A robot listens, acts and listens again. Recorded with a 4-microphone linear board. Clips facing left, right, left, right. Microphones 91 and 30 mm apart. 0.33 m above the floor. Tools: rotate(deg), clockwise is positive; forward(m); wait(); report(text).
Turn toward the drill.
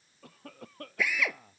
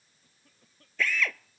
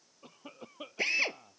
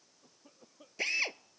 rotate(-30)
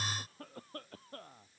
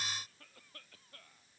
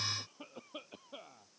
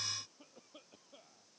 wait()
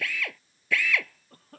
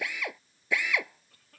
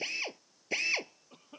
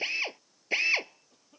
rotate(20)
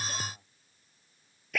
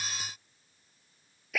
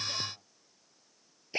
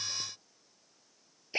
report("Found it: a drill, straight ahead.")